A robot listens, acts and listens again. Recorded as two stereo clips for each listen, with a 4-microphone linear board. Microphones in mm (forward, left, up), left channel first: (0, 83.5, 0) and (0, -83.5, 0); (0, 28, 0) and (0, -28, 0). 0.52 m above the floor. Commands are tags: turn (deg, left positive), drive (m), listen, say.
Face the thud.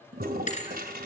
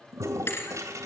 <turn deg="45"/>
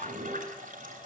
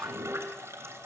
<listen/>
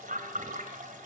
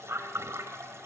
<say>I heard a thud, but can't make it out now. It was about straight ahead or 90° left.</say>